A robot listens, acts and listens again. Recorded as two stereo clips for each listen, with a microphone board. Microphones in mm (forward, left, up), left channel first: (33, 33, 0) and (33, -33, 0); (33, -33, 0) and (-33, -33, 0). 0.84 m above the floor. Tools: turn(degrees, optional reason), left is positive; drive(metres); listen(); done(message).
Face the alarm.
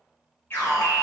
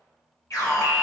turn(degrees=35, reason="The alarm: 35° left.")
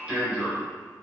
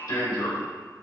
turn(degrees=-15, reason="The alarm is now 15° right.")
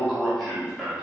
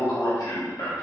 done("Facing the alarm, over 4 m away.")